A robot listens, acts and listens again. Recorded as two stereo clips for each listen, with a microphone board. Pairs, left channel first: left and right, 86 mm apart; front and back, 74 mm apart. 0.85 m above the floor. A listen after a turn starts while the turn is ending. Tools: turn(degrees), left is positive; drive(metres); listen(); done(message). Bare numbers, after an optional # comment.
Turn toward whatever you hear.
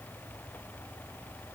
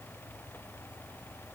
listen()
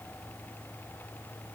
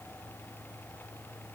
listen()
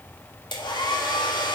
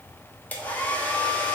# The hair dryer: 65° left.
turn(65)
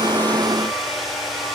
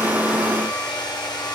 done("Found it: a hair dryer, straight ahead.")